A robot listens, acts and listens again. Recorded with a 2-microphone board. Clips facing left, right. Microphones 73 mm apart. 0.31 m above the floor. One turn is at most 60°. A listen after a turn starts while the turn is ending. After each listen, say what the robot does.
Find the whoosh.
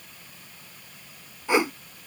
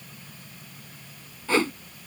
Turn 15° left.
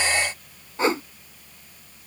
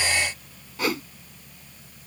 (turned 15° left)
Turn 60° left.
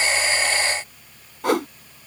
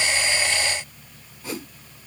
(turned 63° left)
Turn 60° left.
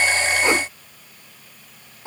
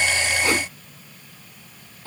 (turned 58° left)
Turn 25° left.
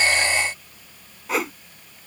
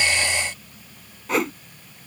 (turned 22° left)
Facing the whoosh.